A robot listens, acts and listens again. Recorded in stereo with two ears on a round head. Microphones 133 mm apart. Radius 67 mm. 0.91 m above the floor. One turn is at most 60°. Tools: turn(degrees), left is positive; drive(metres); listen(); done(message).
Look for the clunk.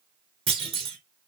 turn(degrees=-45)
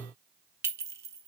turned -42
listen()
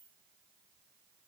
done("I heard a clunk, but can't make it out now. It was about straight ahead or 95° right.")